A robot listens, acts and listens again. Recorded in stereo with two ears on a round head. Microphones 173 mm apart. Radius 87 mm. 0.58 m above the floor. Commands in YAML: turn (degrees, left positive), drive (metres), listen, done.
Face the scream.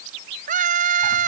turn: -40
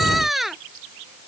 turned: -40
done: "Facing the scream."